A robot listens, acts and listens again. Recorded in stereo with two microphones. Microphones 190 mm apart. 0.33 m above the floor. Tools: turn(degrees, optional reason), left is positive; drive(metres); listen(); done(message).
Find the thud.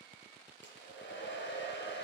listen()
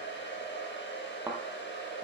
turn(degrees=-30)
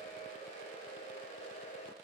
listen()
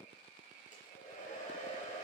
done("I heard a thud, but can't make it out now. It was about 15° left or 135° right.")